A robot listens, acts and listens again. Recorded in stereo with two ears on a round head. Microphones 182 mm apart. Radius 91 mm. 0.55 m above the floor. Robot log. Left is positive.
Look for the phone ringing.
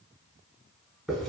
cmd idle
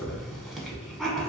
cmd idle
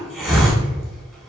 end: I can't make out a phone ringing to turn to.